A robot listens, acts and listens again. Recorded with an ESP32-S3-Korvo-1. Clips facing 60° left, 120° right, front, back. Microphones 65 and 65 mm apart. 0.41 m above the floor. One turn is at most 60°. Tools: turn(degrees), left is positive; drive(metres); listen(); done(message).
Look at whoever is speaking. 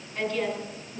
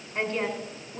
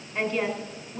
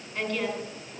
turn(degrees=-60)
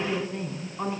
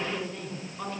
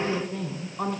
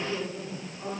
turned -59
done("Found it: a woman speaking, straight ahead, 2 to 4 m away.")